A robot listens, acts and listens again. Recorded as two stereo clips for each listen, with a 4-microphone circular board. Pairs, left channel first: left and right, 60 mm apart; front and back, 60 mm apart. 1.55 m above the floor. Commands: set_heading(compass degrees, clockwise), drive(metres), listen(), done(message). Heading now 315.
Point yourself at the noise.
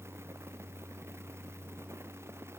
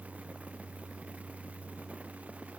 listen()
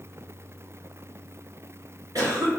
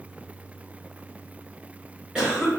set_heading(60)
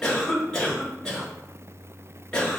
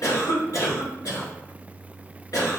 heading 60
set_heading(45)
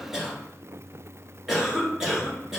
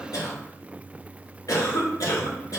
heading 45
done("Found it: a cough, straight ahead, 1 to 2 m away.")